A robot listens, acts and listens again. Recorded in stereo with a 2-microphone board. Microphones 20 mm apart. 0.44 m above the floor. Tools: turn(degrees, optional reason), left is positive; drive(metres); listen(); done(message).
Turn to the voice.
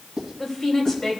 turn(degrees=20, reason="The woman speaking: about 20° left or 160° left.")
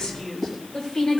turn(degrees=35, reason="The woman speaking: about 35° left or 145° left.")
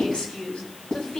turn(degrees=110, reason="So it is at 110° left.")
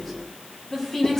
turn(degrees=20, reason="The woman speaking is now 20° left.")
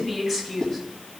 done("Found it: a woman speaking, straight ahead.")